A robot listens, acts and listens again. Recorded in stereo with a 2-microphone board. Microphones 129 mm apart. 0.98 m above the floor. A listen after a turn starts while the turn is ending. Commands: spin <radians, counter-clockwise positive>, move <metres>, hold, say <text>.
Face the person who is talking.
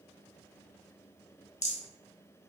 hold
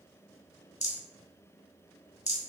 hold
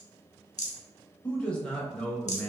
spin 0.52
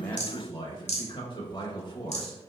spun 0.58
spin 2.44
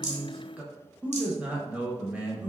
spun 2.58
spin -0.17
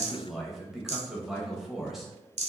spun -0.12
say Found it: a man speaking, straight ahead, under 1 m away.